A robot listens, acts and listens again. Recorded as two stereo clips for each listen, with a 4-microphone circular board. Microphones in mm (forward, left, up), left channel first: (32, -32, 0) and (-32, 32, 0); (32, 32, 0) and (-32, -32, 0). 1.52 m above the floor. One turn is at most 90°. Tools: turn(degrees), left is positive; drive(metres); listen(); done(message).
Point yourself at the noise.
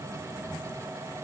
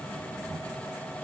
listen()
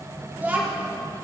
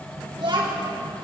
turn(degrees=-90)
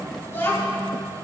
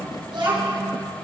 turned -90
turn(degrees=-90)
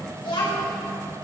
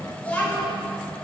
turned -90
turn(degrees=-30)
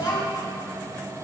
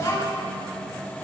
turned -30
turn(degrees=-10)
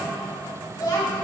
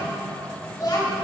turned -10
done("Found it: a child speaking, straight ahead, over 4 m away.")